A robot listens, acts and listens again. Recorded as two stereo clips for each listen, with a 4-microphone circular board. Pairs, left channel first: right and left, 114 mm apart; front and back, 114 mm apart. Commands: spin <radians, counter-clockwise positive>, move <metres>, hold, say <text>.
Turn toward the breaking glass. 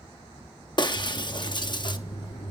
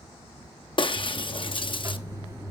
spin -0.79
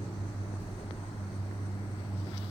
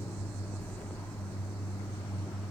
say I heard breaking glass from this way, but can't make it out now.